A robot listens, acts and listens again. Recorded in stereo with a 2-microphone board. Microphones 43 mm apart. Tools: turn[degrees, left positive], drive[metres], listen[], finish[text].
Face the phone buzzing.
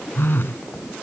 Thought: The phone buzzing: about 55° left or 125° left.
Action: turn[55]
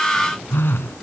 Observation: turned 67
Thought: So it is at 55° left.
Action: turn[55]
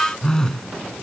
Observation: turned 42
Thought: The phone buzzing is now 15° left.
Action: turn[15]
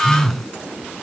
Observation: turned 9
Action: finish[Facing the phone buzzing.]